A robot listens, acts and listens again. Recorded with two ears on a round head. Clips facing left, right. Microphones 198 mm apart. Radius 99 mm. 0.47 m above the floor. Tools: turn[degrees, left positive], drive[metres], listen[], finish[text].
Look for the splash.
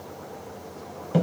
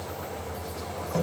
Action: listen[]
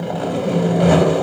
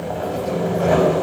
Action: listen[]
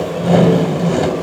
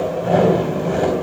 Action: finish[I can't make out a splash, only sawing.]